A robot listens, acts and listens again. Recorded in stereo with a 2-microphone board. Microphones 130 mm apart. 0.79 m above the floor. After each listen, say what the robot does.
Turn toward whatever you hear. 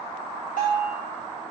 Turn 90° left.
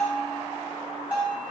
Turn 15° right.
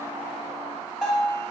Found it: a bell, straight ahead.